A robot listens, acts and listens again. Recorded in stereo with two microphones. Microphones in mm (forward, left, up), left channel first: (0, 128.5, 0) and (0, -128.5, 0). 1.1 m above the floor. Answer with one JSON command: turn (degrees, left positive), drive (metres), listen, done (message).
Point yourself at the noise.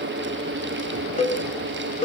{"turn": 30}
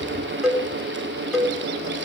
{"done": "Facing the cowbell."}